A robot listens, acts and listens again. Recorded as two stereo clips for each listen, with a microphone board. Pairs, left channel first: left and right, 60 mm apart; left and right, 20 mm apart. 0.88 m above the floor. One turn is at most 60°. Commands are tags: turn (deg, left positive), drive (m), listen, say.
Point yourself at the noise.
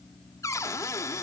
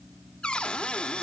<turn deg="55"/>
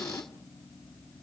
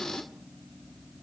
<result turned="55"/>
<turn deg="60"/>
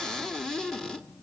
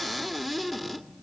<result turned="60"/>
<turn deg="10"/>
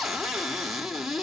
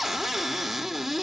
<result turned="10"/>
<say>Facing the cupboard door.</say>